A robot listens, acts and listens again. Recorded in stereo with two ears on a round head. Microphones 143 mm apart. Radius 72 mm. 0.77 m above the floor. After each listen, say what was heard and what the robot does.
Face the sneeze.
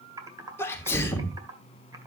The sneeze: about 15° left or 165° left. Turn 15° left.
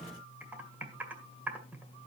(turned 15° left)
Keep listening.
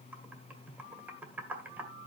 I heard a sneeze, but can't make it out now. It was about straight ahead or 150° left.